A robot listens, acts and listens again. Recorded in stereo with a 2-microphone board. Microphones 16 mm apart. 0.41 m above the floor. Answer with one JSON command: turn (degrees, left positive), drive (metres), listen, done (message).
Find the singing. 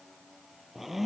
{"listen": true}
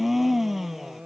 {"turn": -60}
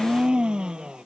{"listen": true}
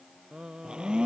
{"turn": -55}
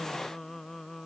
{"turn": 25}
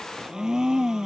{"listen": true}
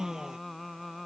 {"done": "Facing the singing."}